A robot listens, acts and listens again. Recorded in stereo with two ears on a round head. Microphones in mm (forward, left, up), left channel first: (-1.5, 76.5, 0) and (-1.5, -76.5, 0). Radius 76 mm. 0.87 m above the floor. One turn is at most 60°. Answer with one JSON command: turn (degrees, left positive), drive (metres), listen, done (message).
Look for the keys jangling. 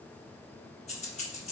{"turn": 40}
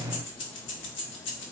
{"turn": 60}
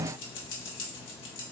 {"turn": 60}
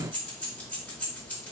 {"turn": 10}
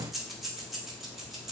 {"done": "Facing the keys jangling."}